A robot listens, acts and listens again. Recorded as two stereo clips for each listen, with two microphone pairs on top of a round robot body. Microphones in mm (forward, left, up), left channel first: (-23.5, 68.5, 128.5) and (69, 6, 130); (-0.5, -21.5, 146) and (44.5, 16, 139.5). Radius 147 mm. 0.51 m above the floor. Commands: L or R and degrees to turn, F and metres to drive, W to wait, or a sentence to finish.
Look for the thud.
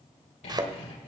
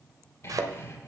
L20
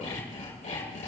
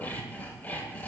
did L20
Facing where the thud came from. I can't hear it now.